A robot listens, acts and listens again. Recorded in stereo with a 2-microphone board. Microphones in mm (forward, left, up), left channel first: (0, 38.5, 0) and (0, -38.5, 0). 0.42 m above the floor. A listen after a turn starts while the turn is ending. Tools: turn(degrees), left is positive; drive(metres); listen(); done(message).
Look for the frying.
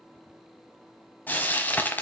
turn(degrees=25)
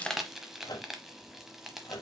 done("Facing the frying, under 1 m away.")